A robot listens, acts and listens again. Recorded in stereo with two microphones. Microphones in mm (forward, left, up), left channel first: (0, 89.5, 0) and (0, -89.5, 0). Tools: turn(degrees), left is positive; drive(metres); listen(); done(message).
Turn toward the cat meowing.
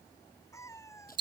turn(degrees=15)
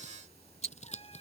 listen()
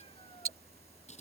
listen()
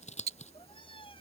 turn(degrees=25)
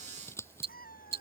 turn(degrees=130)
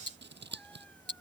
listen()
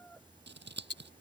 listen()
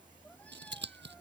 done("I heard a cat meowing from this way, but can't make it out now.")